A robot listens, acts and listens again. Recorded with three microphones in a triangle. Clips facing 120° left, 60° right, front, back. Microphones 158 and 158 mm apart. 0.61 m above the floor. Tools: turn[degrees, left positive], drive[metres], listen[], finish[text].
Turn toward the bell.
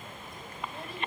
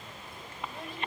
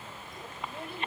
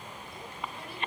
Action: listen[]
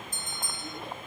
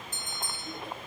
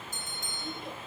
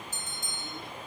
Thought: The bell: 75° right.
Action: turn[-75]
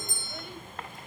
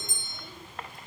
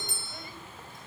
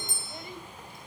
Thought: The bell is now 10° left.
Action: turn[10]
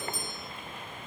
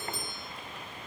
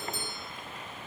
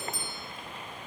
Action: listen[]
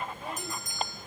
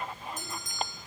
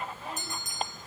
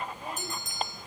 Action: finish[Facing the bell, 2 to 4 m away.]